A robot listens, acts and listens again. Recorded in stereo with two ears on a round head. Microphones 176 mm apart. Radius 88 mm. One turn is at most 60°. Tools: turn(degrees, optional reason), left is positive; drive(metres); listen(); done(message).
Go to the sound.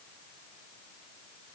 listen()
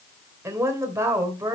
turn(degrees=-15, reason="The woman speaking: about 15° right or 165° right.")
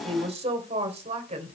turn(degrees=-60, reason="So it is at 145° right.")
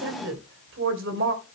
turn(degrees=-60, reason="The woman speaking is now 75° right.")
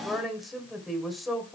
drive(metres=1.0)
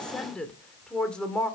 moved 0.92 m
drive(metres=1.0)
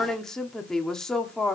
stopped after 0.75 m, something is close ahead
done("Arrived at the woman speaking, straight ahead.")